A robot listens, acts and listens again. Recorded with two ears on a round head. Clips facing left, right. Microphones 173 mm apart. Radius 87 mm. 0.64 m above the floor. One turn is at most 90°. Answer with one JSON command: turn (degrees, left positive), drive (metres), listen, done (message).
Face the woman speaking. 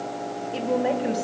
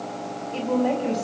{"turn": 30}
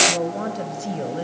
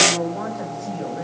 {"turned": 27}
{"turn": 90}
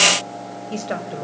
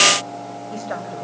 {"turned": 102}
{"turn": 30}
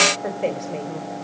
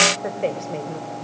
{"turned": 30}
{"done": "Facing the woman speaking, 2 to 4 m away."}